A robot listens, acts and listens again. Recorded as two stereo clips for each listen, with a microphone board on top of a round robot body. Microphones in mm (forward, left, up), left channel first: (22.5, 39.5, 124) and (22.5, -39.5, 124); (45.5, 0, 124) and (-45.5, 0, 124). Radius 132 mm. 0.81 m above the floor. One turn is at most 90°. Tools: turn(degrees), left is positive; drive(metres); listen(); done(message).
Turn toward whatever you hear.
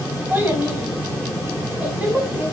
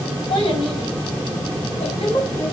turn(degrees=-20)
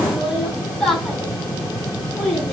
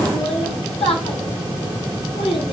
turn(degrees=10)
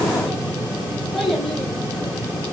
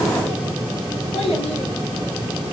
done("Facing the child speaking, over 4 m away.")